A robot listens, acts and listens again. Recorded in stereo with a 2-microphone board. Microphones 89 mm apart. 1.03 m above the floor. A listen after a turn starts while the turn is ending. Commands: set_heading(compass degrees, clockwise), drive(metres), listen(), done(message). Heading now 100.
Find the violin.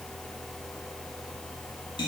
listen()
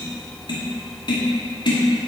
listen()
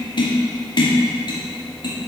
done("I can't make out a violin, only tapping.")